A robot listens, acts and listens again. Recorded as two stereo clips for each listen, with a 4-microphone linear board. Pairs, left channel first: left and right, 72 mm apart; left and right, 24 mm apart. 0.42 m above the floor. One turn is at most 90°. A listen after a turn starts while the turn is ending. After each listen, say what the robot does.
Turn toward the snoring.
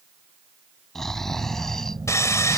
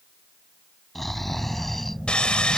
Turn 30° left.
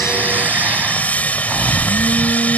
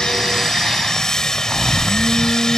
Turn 25° right.
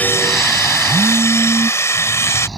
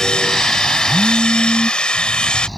Facing the snoring.